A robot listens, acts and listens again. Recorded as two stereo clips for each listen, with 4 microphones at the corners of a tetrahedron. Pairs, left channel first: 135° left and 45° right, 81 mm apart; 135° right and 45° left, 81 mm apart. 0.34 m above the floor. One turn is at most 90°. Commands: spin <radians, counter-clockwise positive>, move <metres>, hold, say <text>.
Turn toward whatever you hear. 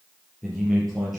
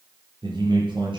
spin 0.79
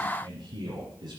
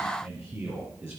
spin -0.17
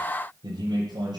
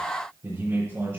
spin -0.17
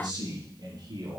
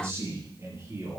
say Facing the man speaking.